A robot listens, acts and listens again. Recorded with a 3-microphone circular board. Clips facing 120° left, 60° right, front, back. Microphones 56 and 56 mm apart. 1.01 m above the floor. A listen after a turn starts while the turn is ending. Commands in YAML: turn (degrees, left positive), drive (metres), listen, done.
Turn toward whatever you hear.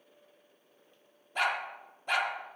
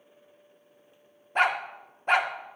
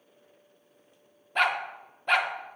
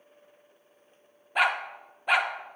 turn: -100
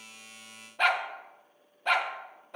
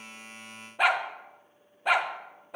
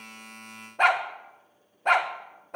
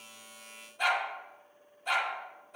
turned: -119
turn: 20
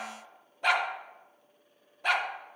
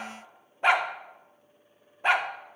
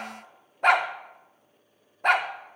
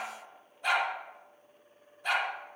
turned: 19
done: "Facing the dog barking."